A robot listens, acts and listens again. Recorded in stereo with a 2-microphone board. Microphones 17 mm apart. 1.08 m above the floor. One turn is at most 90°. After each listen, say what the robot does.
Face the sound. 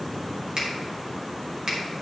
Turn 55° right.
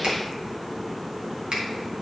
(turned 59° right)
Turn 65° right.
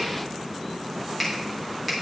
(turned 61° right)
Facing the finger snap.